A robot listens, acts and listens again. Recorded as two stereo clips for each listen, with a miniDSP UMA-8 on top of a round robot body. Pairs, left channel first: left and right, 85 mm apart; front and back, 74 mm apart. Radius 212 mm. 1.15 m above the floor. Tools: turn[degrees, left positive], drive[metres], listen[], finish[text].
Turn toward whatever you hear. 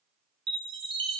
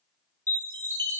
Thought: The chime: 60° right.
Action: turn[-60]
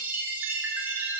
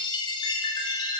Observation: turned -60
Thought: The chime is now 20° right.
Action: turn[-20]
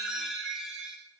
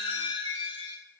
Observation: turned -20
Action: finish[Facing the chime, under 1 m away.]